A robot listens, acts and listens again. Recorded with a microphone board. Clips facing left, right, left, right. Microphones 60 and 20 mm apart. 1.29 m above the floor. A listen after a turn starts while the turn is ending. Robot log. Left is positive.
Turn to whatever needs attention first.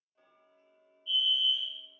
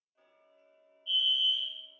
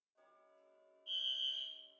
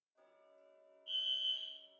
cmd yaw +30
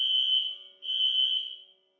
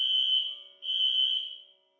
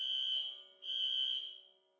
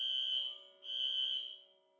note: So it is at 135° left.
cmd yaw +135
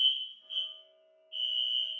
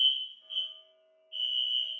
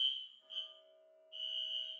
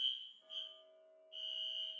end: Facing the fire alarm.